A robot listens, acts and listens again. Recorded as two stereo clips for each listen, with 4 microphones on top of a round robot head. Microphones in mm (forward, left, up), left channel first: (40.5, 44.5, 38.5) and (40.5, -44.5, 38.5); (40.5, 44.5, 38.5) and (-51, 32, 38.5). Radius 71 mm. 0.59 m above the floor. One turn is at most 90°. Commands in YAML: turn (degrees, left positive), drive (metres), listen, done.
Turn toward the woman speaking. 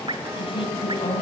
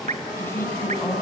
turn: 75
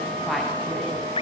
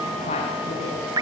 done: "Found it: a woman speaking, straight ahead, over 4 m away."